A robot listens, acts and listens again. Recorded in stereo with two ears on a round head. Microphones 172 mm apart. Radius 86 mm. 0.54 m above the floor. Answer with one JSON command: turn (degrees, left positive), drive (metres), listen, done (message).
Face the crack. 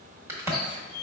{"turn": -30}
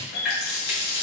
{"listen": true}
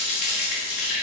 {"done": "I heard a crack, but can't make it out now. It was about 15° left or 135° right."}